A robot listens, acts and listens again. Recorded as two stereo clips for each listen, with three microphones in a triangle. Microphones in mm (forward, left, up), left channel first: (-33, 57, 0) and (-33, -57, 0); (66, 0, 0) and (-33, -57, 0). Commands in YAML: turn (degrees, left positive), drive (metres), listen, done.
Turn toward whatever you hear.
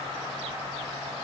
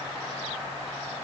listen: true
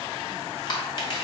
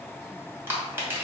turn: 140
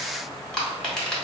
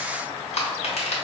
done: "Found it: crushing, straight ahead, 1 to 2 m away."